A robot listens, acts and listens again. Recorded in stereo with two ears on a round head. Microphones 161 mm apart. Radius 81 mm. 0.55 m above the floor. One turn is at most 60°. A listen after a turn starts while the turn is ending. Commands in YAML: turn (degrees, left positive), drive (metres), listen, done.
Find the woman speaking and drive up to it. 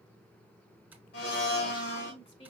turn: 35
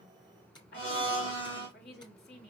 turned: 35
turn: 60
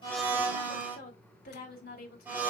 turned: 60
turn: 60
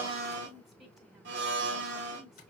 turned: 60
drive: 1.0
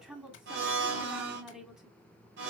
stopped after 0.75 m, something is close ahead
done: "I am next to the woman speaking."